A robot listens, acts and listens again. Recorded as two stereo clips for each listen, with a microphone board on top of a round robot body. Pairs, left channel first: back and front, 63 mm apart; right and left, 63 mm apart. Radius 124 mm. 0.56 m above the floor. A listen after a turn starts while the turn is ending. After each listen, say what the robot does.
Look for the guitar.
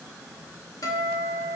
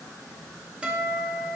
Turn 165° left.
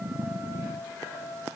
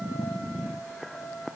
Turn 30° left.
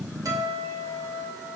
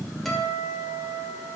Turn 10° right.
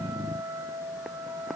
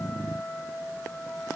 Found it: a guitar, straight ahead, 1 to 2 m away.